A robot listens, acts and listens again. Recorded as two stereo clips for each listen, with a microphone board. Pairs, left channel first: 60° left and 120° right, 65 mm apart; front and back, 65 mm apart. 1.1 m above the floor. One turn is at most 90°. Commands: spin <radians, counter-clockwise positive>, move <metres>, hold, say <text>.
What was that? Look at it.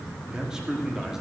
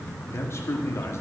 spin -0.70
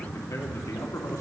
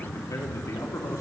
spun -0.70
hold
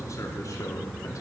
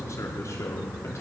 hold
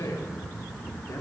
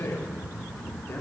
spin 0.70
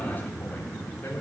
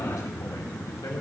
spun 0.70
hold
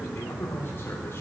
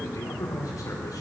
say Found it: a man speaking, straight ahead.